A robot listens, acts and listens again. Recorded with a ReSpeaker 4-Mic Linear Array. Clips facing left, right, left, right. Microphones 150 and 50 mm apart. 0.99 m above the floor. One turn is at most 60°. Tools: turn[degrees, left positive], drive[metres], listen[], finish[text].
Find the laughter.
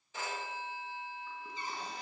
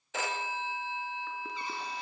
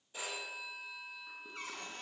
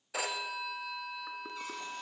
Action: listen[]
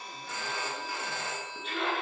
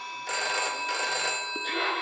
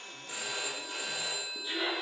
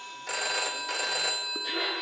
Thought: The laughter: about 50° right or 130° right.
Action: turn[-50]
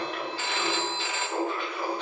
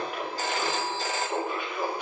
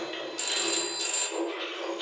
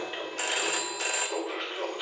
Thought: So it is at 10° right.
Action: turn[-10]
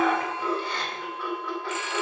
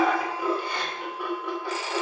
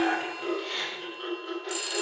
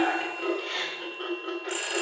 Thought: The laughter is now 10° right.
Action: turn[-10]
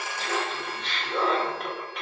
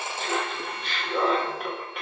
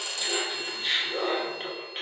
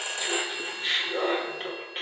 Action: finish[Found it: laughter, straight ahead.]